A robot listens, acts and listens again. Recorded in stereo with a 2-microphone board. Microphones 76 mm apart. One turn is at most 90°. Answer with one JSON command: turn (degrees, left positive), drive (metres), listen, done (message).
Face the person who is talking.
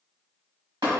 {"listen": true}
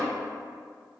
{"listen": true}
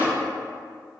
{"done": "I can't make out anyone speaking to turn to."}